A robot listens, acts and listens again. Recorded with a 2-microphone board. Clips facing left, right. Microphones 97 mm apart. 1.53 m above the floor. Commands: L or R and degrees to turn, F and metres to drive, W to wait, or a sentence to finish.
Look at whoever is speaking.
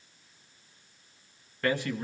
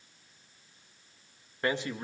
R20
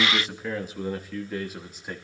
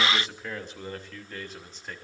L10
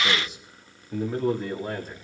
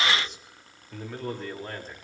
L10
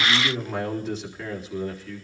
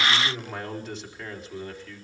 Found it: a man speaking, straight ahead, over 4 m away.